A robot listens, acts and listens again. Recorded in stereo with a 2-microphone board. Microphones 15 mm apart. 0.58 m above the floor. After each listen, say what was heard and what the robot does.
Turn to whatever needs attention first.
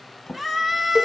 The scream: about 20° right or 160° right. Turn 20° right.
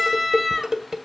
Facing the scream, 2 to 4 m away.